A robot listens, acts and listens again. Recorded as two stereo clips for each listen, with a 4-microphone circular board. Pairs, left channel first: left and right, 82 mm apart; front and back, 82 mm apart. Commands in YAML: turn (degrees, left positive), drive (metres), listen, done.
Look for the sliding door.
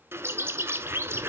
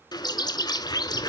listen: true
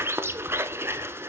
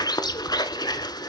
listen: true
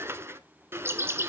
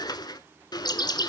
done: "I can't make out a sliding door to turn to."